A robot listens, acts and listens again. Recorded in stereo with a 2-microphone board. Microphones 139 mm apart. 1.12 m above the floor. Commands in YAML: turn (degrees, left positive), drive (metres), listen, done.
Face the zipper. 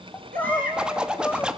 turn: -30
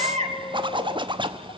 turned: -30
turn: -145
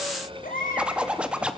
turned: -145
turn: -10
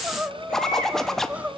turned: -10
done: "Facing the zipper, 1 to 2 m away."